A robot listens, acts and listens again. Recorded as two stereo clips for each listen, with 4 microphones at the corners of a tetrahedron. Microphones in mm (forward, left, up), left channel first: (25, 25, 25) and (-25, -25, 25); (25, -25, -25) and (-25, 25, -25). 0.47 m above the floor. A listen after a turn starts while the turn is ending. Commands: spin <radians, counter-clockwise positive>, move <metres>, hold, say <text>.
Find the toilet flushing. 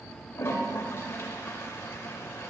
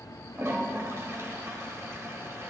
spin 1.57
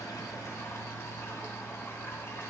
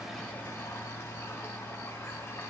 say Found it: a toilet flushing, straight ahead.